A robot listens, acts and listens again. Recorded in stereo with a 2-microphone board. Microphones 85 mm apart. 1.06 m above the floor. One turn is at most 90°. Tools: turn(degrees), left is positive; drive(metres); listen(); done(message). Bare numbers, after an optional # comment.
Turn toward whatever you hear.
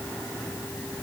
listen()
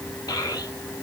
# The child speaking: about 50° left or 130° left.
turn(50)
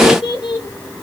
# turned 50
# So it is at 85° left.
turn(85)
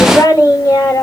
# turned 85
# The child speaking is now 50° left.
turn(50)
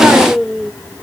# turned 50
done("Found it: a child speaking, straight ahead, 2 to 4 m away.")